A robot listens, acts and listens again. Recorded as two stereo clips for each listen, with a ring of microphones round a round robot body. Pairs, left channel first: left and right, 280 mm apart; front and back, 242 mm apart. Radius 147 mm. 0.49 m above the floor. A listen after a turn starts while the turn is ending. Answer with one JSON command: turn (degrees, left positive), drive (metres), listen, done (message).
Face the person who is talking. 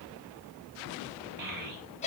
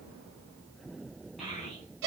{"turn": -90}
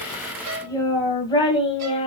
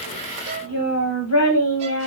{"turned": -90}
{"turn": 20}
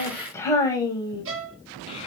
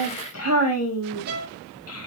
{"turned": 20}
{"turn": 15}
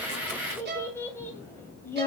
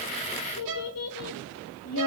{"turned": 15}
{"turn": 10}
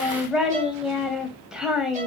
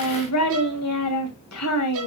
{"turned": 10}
{"done": "Found it: a child speaking, straight ahead."}